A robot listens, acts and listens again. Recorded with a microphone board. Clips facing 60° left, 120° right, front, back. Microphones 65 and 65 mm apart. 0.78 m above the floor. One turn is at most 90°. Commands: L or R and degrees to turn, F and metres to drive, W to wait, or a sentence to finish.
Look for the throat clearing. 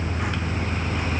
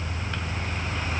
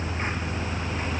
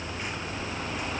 W
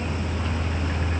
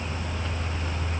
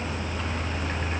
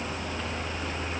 W
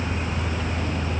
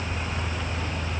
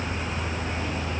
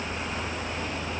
I can't make out throat clearing to turn to.